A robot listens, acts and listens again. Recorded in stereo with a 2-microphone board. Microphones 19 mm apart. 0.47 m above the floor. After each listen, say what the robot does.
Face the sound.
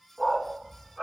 Turn 30° left.
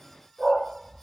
Turn 25° right.
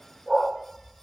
Found it: a dog barking, straight ahead.